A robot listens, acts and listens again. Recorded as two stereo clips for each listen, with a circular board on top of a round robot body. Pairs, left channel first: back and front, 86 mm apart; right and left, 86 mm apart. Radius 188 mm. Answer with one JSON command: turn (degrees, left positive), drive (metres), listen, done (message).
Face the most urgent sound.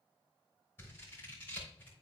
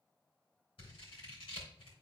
{"listen": true}
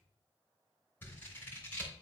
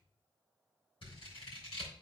{"listen": true}
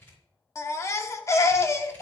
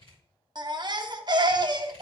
{"turn": 125}
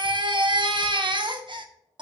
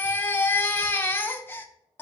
{"turn": -25}
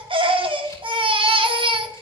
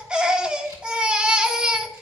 {"turn": 10}
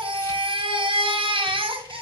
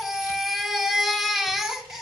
{"done": "Found it: a baby crying, straight ahead, under 1 m away."}